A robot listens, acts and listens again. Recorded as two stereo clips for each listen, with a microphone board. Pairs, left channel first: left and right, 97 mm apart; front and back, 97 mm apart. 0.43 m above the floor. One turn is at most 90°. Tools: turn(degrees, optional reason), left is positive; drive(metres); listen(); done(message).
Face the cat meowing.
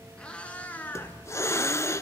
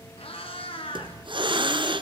turn(degrees=20, reason="The cat meowing: 20° left.")
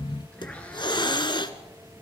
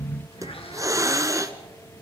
listen()
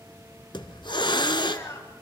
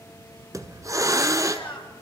turn(degrees=35, reason="The cat meowing is now 35° left.")
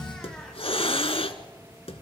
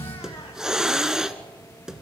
listen()
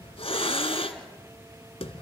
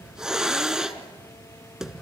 listen()
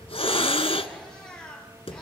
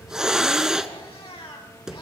turn(degrees=10, reason="The cat meowing is now 10° left.")
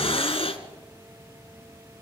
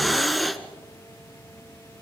listen()
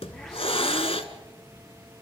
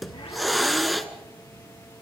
listen()
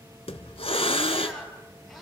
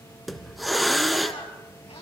done("I heard a cat meowing from this way, but can't make it out now.")